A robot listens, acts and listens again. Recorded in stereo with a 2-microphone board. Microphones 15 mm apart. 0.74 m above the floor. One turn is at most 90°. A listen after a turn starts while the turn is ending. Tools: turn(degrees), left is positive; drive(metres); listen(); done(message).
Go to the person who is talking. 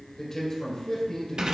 turn(degrees=35)
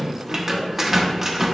listen()
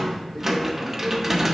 listen()
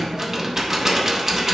done("I heard a man speaking, but can't make it out now. It was about straight ahead or 110° left. I did not reach it.")